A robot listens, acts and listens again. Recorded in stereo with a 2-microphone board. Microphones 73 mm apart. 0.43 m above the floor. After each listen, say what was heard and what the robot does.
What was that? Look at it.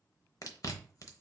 The chewing: about 50° left or 130° left. Turn 50° left.
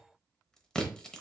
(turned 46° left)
So it is at 10° left. Turn 10° left.
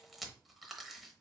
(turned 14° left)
Found it: chewing, straight ahead, under 1 m away.